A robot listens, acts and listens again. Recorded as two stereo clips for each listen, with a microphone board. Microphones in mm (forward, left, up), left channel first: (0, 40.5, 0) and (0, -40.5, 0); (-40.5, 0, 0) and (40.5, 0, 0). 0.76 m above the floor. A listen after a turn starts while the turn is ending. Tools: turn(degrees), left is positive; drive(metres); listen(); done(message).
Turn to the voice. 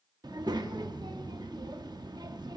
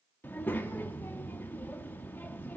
turn(degrees=-115)
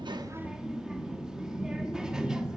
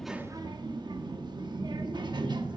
turn(degrees=-10)
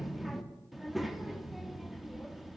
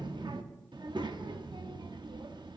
done("Facing the child speaking, under 1 m away.")